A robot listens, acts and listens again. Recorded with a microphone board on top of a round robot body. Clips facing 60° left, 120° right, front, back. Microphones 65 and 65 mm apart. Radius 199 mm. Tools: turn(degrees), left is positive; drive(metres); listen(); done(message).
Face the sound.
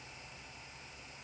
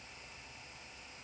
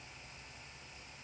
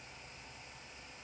listen()
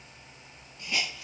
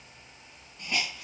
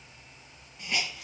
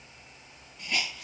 turn(degrees=-85)
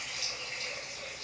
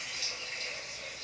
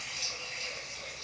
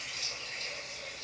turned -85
done("Found it: a hiss, straight ahead, 1 to 2 m away.")